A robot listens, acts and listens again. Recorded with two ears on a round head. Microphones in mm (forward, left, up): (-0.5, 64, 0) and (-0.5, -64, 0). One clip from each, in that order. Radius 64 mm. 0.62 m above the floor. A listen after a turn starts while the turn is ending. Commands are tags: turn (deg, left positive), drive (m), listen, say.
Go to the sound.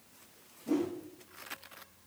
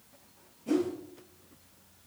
<turn deg="-60"/>
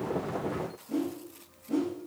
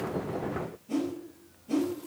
<turn deg="-50"/>
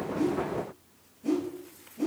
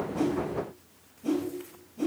<drive m="1.0"/>
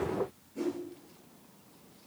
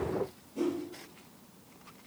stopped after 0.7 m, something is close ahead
<say>Something is in my way. I am facing the whoosh but have not reached it.</say>